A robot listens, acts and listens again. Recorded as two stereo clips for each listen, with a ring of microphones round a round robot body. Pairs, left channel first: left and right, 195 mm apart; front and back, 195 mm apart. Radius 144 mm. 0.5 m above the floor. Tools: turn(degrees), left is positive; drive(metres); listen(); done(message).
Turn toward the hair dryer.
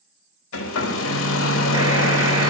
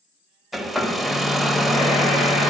turn(degrees=90)
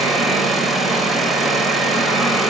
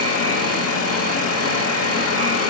done("Facing the hair dryer.")